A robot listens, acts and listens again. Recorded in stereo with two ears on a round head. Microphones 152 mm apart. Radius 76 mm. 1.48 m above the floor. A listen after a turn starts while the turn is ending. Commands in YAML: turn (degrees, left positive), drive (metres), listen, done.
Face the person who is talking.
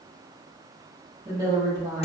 turn: -15
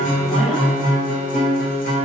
listen: true
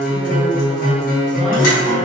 listen: true
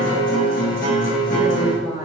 done: "Facing the woman speaking."